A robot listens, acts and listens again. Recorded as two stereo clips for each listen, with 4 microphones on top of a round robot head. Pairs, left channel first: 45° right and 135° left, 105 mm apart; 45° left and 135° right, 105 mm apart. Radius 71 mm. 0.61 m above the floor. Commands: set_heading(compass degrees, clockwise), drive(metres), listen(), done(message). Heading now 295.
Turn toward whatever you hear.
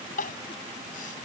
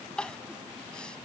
set_heading(335)
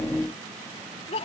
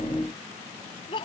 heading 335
done("Facing the crying.")